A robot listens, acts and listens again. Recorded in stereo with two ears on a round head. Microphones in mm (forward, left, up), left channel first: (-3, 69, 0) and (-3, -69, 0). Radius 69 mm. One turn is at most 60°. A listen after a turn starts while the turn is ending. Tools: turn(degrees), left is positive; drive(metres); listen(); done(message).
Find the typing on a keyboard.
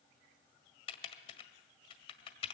turn(degrees=35)
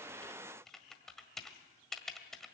done("Found it: typing on a keyboard, straight ahead, 1 to 2 m away.")